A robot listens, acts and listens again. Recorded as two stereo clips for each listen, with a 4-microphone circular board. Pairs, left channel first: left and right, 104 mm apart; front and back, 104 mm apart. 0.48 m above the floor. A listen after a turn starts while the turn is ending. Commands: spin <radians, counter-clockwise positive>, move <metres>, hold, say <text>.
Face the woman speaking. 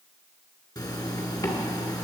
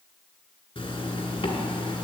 hold
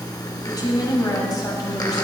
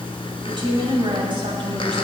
spin 2.44
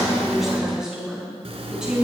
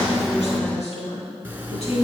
say Facing the woman speaking, over 4 m away.